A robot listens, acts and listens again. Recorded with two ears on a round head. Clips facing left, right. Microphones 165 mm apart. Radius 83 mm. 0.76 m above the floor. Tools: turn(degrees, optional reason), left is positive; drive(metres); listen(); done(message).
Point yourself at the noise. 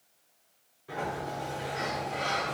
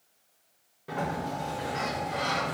turn(degrees=-60, reason="The sliding door: about 60° right or 120° right.")
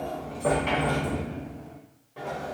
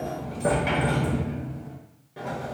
turn(degrees=-15, reason="So it is at 15° right.")
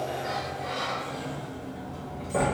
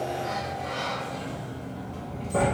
done("Facing the sliding door.")